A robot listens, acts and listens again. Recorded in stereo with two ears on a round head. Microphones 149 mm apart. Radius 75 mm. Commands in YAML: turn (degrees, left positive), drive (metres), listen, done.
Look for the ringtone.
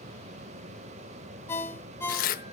turn: 30
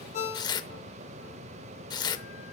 turn: 135
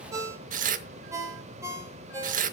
turn: -20
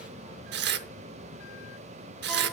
listen: true
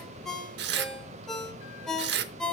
done: "Facing the ringtone."